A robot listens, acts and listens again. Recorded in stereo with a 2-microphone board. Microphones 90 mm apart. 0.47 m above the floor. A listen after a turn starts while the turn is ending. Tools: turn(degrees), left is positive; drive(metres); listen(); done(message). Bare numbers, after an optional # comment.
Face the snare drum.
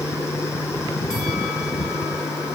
listen()
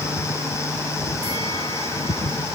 listen()
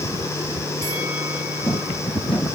done("I can't make out a snare drum.")